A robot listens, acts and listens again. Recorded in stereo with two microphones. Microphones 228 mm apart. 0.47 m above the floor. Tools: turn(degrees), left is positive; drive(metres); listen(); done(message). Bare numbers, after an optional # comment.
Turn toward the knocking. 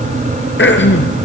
listen()
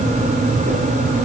listen()
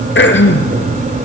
done("I can't make out knocking to turn to.")